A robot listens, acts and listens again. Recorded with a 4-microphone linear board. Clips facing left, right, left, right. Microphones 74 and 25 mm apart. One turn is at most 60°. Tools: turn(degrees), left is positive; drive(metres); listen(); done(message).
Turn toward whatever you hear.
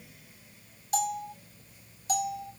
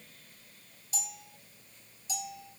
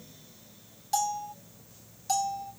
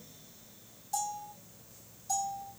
turn(degrees=55)
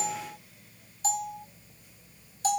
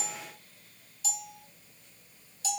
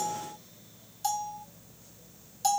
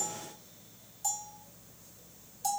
turn(degrees=55)
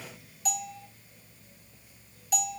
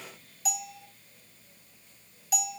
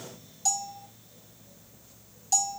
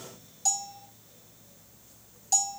done("Found it: a bell, straight ahead, under 1 m away.")